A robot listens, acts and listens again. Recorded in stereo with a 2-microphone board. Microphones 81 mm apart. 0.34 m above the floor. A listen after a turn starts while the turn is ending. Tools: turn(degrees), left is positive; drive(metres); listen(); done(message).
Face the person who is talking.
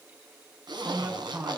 turn(degrees=-15)
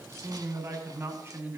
turn(degrees=-150)
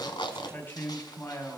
turn(degrees=30)
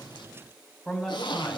done("Found it: a man speaking, straight ahead, 2 to 4 m away.")